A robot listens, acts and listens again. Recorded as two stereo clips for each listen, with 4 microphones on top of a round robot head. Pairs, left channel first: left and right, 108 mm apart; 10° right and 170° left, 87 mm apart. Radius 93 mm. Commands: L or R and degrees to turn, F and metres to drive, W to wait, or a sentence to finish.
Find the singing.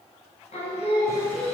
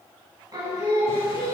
L115
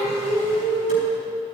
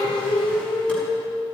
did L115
L15
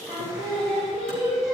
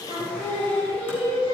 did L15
Found it: singing, straight ahead.